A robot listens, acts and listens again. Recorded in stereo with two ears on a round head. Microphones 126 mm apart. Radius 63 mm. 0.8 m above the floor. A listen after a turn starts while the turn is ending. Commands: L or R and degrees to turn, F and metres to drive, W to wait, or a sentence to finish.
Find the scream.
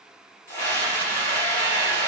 L20
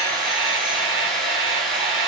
Facing the scream, 2 to 4 m away.